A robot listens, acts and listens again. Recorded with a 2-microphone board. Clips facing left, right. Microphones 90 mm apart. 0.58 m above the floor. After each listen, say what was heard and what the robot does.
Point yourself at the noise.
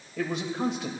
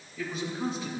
The man speaking: about 70° left or 110° left. Turn 70° left.
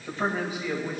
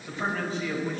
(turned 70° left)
So it is at 10° left. Turn 10° left.
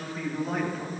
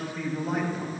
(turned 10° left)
Found it: a man speaking, straight ahead.